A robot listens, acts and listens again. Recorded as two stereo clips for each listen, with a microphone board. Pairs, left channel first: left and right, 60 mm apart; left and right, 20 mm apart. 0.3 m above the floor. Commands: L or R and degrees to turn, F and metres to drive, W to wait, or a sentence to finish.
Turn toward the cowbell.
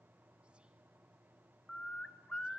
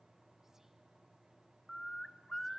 W
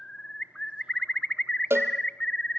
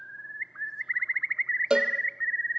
R45
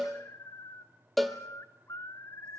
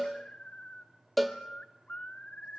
Found it: a cowbell, straight ahead, 1 to 2 m away.